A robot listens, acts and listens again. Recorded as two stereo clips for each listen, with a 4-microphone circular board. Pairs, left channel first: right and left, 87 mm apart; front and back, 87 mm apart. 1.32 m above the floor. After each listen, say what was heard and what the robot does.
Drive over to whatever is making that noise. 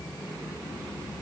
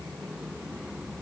Keep listening.
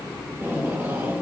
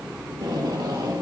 The tape being pulled: 150° left. Turn 150° left.
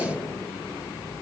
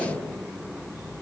The tape being pulled is now 30° right. Turn 30° right.
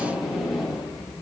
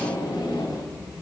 Drive 1.0 m forward.
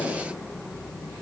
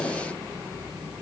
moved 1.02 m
The tape being pulled is now 10° left. Turn 10° left.
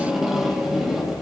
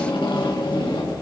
Drive 1.0 m forward.
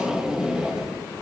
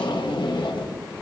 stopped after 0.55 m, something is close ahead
The tape being pulled is now 10° left. Turn 10° left.
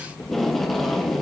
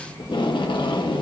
Arrived at the tape being pulled, straight ahead.